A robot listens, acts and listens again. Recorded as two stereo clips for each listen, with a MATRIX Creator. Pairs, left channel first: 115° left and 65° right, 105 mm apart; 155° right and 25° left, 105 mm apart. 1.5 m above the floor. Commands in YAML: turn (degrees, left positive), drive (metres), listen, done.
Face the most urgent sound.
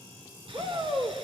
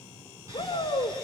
turn: -110
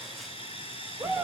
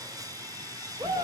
done: "Found it: a shout, straight ahead."